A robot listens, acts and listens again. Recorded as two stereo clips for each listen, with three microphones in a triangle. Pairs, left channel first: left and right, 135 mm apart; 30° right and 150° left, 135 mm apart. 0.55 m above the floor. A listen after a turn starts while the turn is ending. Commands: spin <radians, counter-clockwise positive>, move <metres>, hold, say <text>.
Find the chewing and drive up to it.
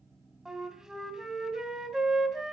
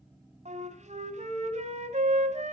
hold
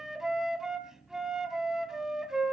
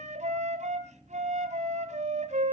hold
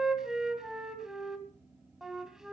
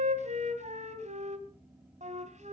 say I can't make out chewing to turn to.